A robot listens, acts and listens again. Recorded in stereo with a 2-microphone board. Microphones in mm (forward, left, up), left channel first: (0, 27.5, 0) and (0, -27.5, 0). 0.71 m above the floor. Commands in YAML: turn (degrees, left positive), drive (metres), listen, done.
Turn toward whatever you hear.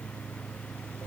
listen: true
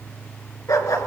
turn: 90
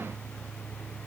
listen: true
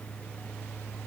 listen: true
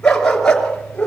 turn: 15
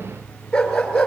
turn: 10
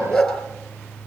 done: "Found it: a dog barking, straight ahead."